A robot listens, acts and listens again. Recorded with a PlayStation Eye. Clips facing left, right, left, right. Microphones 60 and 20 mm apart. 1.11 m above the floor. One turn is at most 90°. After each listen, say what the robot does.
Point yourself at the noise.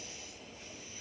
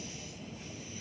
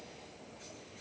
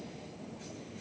Keep listening.
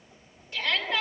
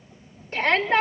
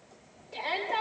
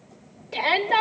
Turn 40° right.
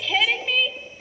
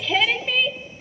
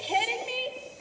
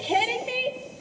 Facing the shout.